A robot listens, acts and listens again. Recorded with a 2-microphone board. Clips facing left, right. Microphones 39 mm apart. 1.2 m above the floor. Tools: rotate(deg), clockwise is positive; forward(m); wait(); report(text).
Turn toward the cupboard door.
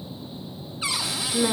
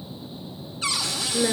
rotate(-20)
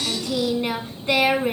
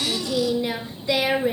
wait()
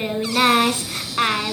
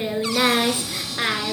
wait()
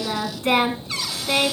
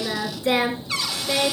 report("Facing the cupboard door.")